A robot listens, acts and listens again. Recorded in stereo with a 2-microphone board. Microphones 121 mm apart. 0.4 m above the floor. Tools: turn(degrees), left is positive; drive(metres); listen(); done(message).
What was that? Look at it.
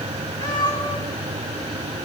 turn(degrees=35)
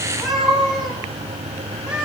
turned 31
turn(degrees=-10)
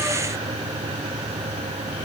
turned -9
listen()
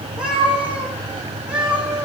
turn(degrees=-10)
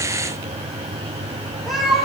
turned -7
done("Facing the cat meowing, over 4 m away.")